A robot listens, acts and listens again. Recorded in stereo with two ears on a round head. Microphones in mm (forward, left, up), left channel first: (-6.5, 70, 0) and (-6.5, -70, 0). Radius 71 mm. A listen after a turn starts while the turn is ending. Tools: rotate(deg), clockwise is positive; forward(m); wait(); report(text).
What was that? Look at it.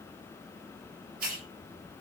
rotate(60)
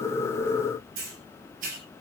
rotate(55)
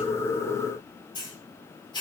rotate(-30)
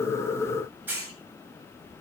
rotate(10)
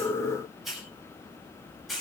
report("Facing the hiss, over 4 m away.")